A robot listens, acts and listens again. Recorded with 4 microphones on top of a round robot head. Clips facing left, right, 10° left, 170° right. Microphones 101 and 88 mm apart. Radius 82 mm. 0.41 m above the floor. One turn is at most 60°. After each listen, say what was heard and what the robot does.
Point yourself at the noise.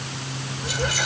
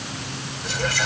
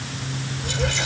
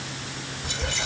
The whispering: 15° left. Turn 15° left.
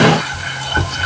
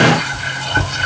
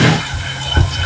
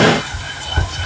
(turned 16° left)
Found it: whispering, straight ahead.